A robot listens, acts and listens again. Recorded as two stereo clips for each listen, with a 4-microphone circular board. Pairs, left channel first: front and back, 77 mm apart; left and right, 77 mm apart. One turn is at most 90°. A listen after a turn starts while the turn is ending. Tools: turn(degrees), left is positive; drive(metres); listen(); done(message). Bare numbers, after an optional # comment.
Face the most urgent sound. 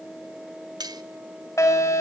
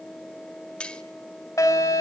# The fire alarm: 45° left.
turn(45)
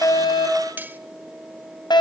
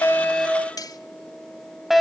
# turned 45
done("Facing the fire alarm.")